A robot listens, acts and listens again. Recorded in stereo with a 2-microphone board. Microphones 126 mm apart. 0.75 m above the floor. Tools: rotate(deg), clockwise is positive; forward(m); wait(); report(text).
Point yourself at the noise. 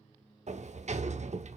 rotate(65)
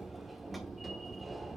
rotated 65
report("Found it: a sliding door, straight ahead, under 1 m away.")